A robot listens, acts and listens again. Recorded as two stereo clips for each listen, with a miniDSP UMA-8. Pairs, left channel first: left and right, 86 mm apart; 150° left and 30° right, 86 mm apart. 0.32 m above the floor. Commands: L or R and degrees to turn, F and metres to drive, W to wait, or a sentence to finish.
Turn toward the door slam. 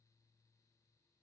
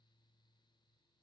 W
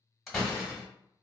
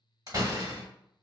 Facing the door slam, 1 to 2 m away.